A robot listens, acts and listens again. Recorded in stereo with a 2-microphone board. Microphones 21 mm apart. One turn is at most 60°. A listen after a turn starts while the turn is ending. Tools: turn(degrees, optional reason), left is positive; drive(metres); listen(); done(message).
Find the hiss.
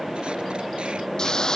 turn(degrees=40, reason="The hiss: about 40° left or 140° left.")
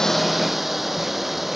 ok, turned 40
done("Facing the hiss.")